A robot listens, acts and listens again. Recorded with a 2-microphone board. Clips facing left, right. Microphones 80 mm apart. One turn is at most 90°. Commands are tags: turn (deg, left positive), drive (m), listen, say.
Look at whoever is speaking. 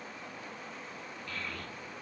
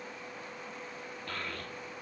<turn deg="-60"/>
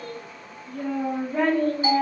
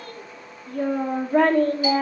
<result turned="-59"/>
<turn deg="-60"/>
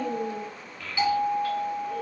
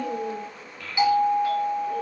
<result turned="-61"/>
<say>Found it: a child speaking, straight ahead.</say>